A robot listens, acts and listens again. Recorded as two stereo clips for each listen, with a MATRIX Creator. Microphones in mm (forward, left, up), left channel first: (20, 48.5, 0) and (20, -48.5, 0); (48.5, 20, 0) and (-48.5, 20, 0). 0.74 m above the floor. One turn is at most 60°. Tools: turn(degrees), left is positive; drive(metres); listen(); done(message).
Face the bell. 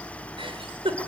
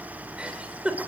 listen()
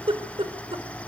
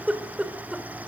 listen()
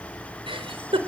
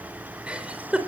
done("I can't make out a bell to turn to.")